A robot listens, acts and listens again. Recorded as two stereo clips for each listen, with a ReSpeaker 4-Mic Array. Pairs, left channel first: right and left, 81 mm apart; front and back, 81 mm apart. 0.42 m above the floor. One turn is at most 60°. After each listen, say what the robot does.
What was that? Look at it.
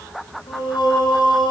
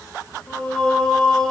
Turn 60° right.
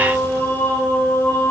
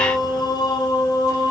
Turn 30° right.
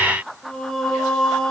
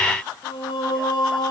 Found it: singing, straight ahead.